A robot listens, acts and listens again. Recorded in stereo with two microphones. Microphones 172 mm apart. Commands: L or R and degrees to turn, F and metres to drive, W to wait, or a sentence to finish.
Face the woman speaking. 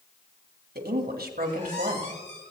R60
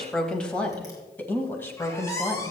L15
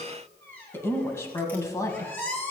L20
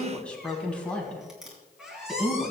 Found it: a woman speaking, straight ahead.